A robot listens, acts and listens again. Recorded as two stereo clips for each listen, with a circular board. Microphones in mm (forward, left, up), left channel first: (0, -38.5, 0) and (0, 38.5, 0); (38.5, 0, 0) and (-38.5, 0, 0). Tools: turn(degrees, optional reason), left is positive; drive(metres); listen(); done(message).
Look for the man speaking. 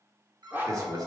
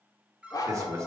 turn(degrees=130, reason="The man speaking: 130° left.")
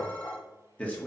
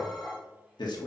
turn(degrees=-20, reason="The man speaking is now 20° right.")
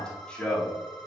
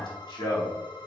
turn(degrees=-20, reason="The man speaking is now 20° right.")
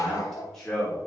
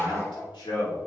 turn(degrees=-10, reason="The man speaking is now 10° right.")
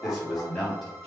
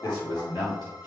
done("Found it: a man speaking, straight ahead, 2 to 4 m away.")